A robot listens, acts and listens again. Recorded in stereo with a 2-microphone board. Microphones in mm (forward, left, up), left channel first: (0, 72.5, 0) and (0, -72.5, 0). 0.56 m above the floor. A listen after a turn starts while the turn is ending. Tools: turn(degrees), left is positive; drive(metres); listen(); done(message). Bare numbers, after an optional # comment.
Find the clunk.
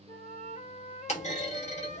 # The clunk: about 55° left or 125° left.
turn(55)
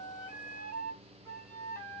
listen()
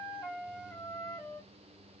done("I heard a clunk, but can't make it out now. It was about straight ahead or 70° left.")